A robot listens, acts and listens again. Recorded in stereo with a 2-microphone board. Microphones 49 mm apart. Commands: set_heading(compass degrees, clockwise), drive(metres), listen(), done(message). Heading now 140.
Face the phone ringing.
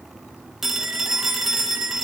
set_heading(170)
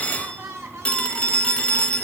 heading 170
set_heading(150)
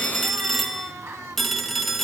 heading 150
done("Facing the phone ringing, 1 to 2 m away.")